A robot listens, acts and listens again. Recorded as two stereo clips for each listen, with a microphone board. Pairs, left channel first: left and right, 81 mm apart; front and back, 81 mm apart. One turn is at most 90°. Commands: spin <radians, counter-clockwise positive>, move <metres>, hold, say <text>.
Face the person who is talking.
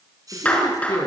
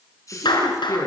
spin 0.87
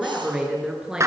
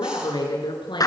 spin -0.17
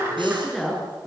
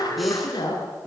say Facing the woman speaking, over 4 m away.